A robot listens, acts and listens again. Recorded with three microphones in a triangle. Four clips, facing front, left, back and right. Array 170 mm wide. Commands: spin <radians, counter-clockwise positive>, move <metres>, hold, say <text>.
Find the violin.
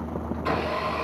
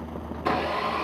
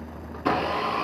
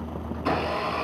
hold
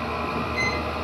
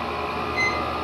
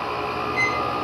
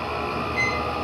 spin 2.18
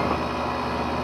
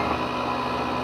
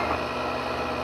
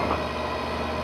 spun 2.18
hold
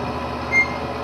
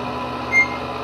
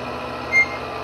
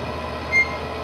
spin 0.35
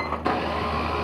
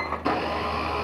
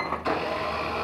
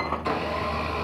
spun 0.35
hold
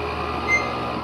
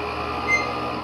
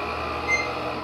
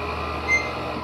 say Found it: a violin, straight ahead.